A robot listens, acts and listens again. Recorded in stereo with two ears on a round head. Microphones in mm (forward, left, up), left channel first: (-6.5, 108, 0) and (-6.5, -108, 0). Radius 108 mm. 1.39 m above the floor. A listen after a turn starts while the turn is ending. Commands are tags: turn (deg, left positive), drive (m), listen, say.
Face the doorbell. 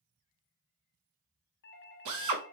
<turn deg="45"/>
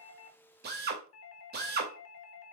<turn deg="80"/>
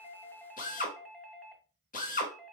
<say>Found it: a doorbell, straight ahead.</say>